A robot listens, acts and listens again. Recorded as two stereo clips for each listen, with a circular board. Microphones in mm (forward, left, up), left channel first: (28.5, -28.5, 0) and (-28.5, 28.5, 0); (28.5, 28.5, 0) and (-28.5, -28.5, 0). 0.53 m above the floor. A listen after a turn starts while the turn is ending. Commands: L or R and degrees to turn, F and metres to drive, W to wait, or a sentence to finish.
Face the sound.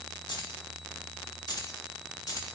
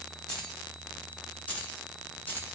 R15
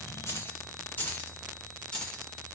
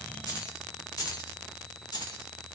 L30
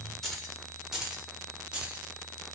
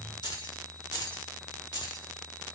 L60
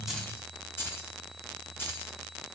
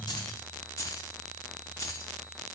L10
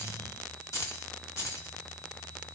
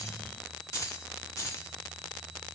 Found it: keys jangling, straight ahead, 1 to 2 m away.